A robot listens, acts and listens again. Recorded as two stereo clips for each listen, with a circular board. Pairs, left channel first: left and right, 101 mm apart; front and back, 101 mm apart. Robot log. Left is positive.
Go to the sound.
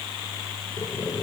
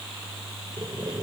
note: The boiling: 145° left.
cmd yaw +145
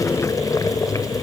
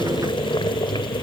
note: The boiling is now 35° left.
cmd yaw +35
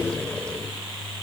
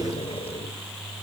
note: The boiling is now 10° left.
cmd yaw +10
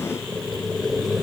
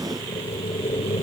cmd fwd 1.0
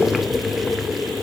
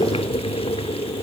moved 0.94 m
cmd fwd 1.0
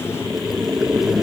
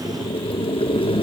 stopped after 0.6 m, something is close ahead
end: Arrived at the boiling, straight ahead.